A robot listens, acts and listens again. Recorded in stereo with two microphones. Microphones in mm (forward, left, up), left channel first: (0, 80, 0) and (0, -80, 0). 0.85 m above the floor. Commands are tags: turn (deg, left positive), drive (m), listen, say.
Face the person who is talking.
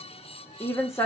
<turn deg="15"/>
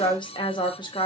<turn deg="150"/>
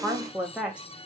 <say>Found it: a woman speaking, straight ahead, under 1 m away.</say>